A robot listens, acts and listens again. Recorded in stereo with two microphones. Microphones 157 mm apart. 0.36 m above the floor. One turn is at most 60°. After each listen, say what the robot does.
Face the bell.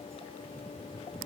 Keep listening.
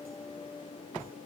Keep listening.
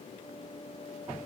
I can't make out a bell.